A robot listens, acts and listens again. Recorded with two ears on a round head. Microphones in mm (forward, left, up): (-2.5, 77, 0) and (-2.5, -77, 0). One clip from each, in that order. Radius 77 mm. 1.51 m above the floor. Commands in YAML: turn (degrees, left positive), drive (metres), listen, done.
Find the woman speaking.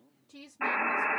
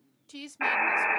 turn: -55
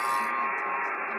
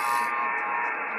listen: true
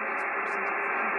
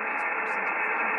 listen: true
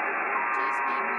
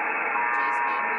done: "I heard a woman speaking, but can't make it out now. It was about straight ahead or 70° right."